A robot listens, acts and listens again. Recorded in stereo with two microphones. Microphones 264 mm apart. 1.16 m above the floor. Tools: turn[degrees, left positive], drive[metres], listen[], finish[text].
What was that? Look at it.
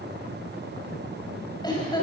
Thought: The laughter: about 15° left or 165° left.
Action: turn[15]
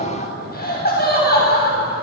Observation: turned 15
Thought: The laughter: about 35° left or 145° left.
Action: turn[35]
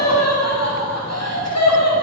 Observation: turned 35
Thought: So it is at 100° left.
Action: turn[100]
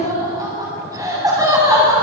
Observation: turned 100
Thought: The laughter is now 15° right.
Action: turn[-15]
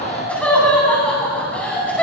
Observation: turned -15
Action: finish[Facing the laughter, over 4 m away.]